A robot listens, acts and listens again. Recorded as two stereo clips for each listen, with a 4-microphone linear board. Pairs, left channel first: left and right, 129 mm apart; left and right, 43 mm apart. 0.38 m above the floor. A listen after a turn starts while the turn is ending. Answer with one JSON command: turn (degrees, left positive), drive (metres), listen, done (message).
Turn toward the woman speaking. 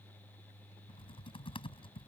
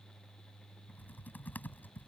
{"listen": true}
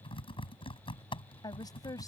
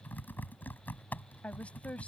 {"turn": 30}
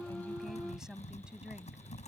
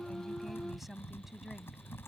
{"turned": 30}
{"done": "Facing the woman speaking."}